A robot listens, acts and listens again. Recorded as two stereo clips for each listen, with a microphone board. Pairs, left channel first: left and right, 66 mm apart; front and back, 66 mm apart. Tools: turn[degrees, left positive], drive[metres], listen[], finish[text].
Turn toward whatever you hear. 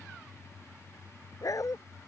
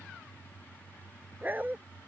Thought: The dog barking: 120° left.
Action: turn[120]
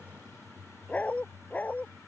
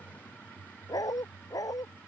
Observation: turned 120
Thought: The dog barking is now 25° left.
Action: turn[25]
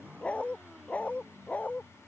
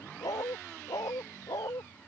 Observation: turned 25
Thought: The dog barking is now 25° left.
Action: turn[25]
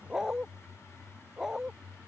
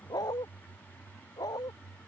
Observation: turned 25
Action: finish[Facing the dog barking.]